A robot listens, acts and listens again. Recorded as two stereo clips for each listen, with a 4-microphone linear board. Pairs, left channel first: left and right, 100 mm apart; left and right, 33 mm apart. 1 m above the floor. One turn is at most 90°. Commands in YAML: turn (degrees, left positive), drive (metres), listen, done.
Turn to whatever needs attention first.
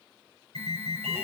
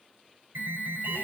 turn: -90
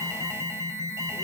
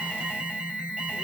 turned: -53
turn: -30
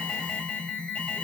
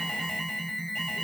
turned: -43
turn: 10
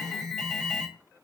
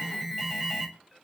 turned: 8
done: "Found it: an alarm, straight ahead."